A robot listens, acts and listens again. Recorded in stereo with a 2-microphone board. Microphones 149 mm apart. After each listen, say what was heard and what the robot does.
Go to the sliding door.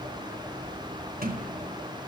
The sliding door: about 65° right or 115° right. Turn 65° right.
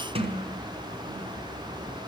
So it is at 40° right. Turn 40° right.
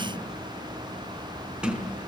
Drive 1.0 m forward.
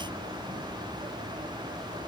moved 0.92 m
Keep listening.
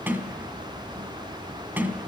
The sliding door is now 10° right. Turn 10° right.
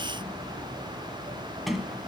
Drive 1.0 m forward.
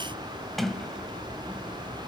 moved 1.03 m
Drive 1.0 m forward.
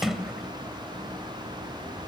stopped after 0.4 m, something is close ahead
I am next to the sliding door.